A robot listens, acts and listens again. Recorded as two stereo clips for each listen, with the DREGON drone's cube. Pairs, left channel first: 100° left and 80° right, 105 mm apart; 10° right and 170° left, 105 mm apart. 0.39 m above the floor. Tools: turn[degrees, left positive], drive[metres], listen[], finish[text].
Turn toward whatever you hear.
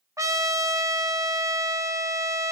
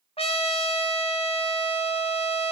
Thought: The trumpet: 20° right.
Action: turn[-20]
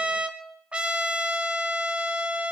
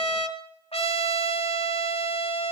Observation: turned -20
Action: finish[Found it: a trumpet, straight ahead.]